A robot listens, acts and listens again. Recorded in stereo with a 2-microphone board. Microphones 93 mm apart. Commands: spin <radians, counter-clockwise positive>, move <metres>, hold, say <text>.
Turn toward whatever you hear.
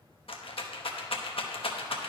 spin 1.57
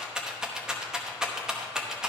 say Facing the rattle.